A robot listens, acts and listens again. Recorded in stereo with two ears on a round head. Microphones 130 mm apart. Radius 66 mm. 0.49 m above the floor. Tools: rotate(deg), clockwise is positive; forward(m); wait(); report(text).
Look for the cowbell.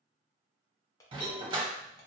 rotate(-50)
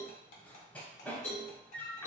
rotate(-15)
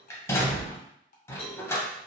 wait()
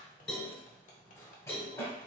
report("Found it: a cowbell, straight ahead.")